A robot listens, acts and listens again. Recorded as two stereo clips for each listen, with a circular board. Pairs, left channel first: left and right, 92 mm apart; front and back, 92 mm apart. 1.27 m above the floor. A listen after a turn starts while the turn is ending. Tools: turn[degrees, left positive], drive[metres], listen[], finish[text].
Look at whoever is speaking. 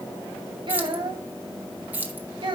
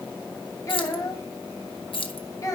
Thought: The child speaking: 55° right.
Action: turn[-55]
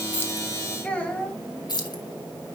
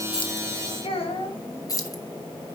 Thought: The child speaking is now 15° left.
Action: turn[15]
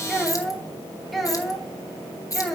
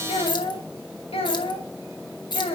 Action: finish[Facing the child speaking, 1 to 2 m away.]